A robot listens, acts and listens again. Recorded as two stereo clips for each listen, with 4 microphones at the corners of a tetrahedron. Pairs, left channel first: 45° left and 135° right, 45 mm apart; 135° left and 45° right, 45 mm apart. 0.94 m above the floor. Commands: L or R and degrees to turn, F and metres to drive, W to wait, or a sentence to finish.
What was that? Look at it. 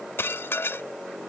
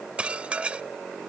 L20
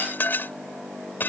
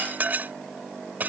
Facing the dishes clattering.